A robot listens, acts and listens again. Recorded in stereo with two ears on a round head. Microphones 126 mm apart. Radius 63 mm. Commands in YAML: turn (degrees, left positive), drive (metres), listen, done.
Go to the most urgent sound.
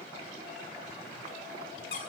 listen: true
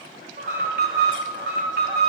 turn: -90
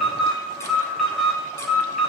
drive: 1.0
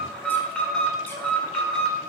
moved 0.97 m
drive: 1.0
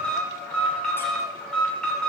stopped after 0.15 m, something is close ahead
done: "Blocked. The alarm is further on, straight ahead."